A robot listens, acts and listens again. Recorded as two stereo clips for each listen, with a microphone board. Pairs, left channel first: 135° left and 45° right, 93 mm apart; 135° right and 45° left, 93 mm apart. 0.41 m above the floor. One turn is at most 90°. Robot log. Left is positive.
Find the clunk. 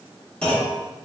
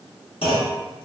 note: The clunk: 145° right.
cmd yaw -90
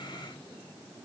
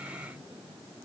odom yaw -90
note: Nothing new. It was at 55° right.
cmd yaw -55
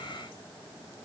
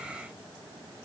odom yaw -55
end: I heard a clunk from this way, but can't make it out now.